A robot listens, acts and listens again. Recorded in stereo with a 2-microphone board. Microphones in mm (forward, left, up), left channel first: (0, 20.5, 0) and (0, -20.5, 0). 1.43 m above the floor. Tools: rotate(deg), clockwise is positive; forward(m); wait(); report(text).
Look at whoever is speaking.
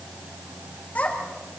rotate(-40)
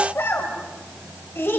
rotate(-100)
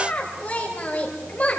rotate(-35)
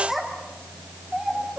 report("Facing the child speaking.")